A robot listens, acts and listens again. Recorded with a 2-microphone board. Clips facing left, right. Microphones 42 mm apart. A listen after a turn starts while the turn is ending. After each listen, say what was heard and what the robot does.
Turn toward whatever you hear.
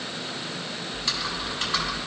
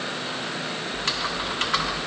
The typing on a keyboard: about 55° right or 125° right. Turn 55° right.
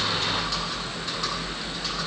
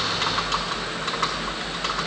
So it is at 70° right. Turn 70° right.
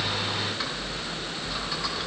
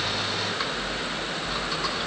Found it: typing on a keyboard, straight ahead, 2 to 4 m away.